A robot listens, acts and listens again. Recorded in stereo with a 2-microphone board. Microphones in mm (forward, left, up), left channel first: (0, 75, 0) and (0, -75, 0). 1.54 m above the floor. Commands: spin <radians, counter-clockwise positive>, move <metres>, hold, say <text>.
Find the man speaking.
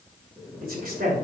spin -1.57
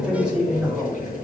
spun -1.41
say Found it: a man speaking, straight ahead, 2 to 4 m away.